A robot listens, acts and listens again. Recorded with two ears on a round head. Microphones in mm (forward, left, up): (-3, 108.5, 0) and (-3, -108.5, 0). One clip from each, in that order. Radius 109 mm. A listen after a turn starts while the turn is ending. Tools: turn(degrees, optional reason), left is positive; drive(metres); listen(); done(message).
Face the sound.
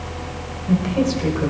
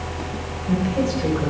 turn(degrees=15, reason="The woman speaking: about 15° left or 165° left.")
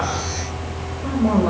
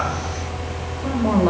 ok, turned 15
turn(degrees=-15, reason="So it is at 15° right.")
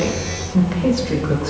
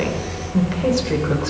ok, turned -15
turn(degrees=-10, reason="The woman speaking is now 10° right.")
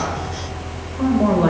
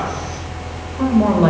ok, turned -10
turn(degrees=-15, reason="The woman speaking is now 15° right.")
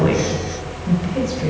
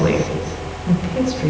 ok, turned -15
done("Facing the woman speaking.")